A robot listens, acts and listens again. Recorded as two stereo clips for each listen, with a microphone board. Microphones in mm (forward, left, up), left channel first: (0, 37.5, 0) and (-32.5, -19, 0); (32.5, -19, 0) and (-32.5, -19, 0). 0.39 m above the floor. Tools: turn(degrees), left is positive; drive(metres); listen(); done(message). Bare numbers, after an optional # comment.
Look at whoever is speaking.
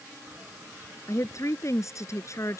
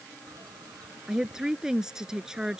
# The woman speaking: 100° left.
turn(100)
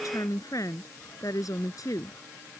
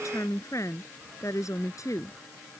# The woman speaking is now 35° left.
turn(35)
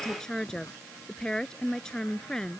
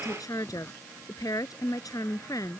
# The woman speaking is now 20° right.
turn(-20)
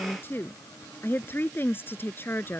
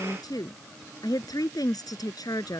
done("Found it: a woman speaking, straight ahead.")